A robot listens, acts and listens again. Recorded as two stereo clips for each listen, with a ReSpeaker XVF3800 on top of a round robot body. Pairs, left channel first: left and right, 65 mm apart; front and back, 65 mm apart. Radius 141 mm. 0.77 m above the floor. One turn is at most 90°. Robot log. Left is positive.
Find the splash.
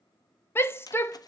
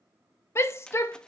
note: The splash: 75° left.
cmd yaw +75
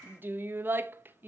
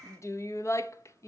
end: I heard a splash from this way, but can't make it out now.